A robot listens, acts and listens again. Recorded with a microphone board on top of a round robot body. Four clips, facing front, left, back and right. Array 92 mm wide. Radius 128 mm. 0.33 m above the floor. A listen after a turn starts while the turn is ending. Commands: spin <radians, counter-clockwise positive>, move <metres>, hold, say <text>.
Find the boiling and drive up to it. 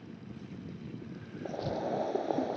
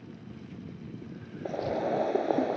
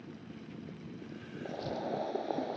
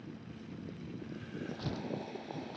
spin 1.40
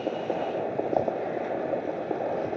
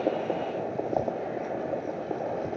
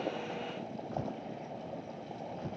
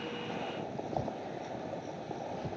spin 0.52
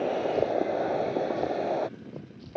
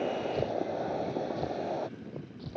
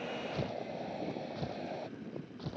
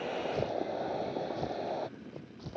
move 1.0
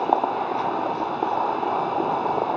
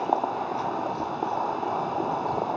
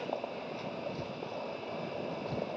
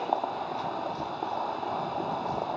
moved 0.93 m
spin 0.26
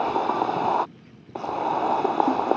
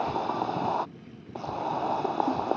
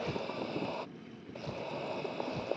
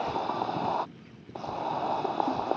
move 1.0
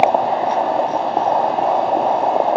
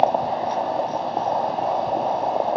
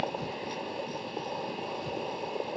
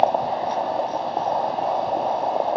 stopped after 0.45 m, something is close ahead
say Arrived at the boiling, straight ahead.